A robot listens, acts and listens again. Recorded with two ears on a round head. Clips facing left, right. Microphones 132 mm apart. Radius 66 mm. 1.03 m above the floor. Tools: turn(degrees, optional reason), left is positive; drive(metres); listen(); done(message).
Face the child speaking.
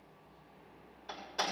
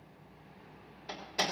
listen()
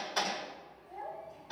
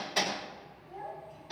turn(degrees=25, reason="The child speaking: about 25° left or 155° left.")
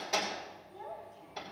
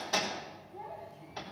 turn(degrees=120, reason="So it is at 120° left.")
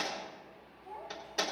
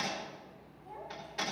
done("Facing the child speaking.")